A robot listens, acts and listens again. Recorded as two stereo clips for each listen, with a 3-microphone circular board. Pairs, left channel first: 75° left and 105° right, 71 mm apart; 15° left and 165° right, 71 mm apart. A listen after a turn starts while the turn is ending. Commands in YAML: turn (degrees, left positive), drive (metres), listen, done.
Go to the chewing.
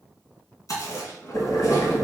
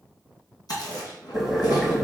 turn: 40
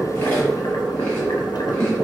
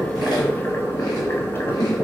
listen: true
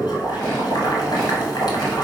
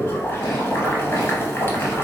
listen: true
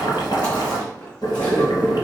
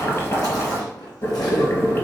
done: "Facing where the chewing came from. I can't hear it now. I did not reach it."